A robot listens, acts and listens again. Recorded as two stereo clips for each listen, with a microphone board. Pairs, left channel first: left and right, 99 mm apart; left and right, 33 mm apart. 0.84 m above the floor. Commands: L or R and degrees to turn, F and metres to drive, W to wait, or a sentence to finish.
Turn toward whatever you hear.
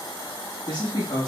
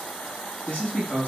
L50
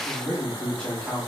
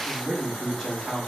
Found it: a man speaking, straight ahead.